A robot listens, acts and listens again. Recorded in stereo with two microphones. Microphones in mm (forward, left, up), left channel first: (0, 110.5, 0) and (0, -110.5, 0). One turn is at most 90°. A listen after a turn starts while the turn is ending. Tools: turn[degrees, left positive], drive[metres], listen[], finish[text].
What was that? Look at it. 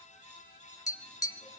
Thought: The tapping: about 15° left or 165° left.
Action: turn[15]
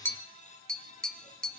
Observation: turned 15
Action: finish[Facing the tapping.]